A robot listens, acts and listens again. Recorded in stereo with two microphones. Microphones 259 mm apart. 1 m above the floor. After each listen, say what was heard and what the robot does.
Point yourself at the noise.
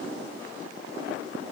Keep listening.
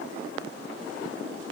Keep listening.
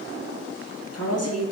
The woman speaking: about 70° left or 110° left. Turn 70° left.
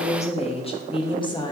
So it is at 15° left. Turn 15° left.
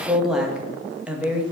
Found it: a woman speaking, straight ahead, 1 to 2 m away.